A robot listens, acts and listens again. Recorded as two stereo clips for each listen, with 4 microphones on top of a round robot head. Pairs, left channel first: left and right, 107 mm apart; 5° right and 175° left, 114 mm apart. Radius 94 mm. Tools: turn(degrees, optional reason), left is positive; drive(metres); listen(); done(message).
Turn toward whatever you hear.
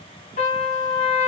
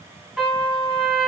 turn(degrees=90, reason="The trumpet: 90° left.")
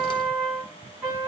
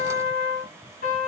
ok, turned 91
done("Facing the trumpet, 2 to 4 m away.")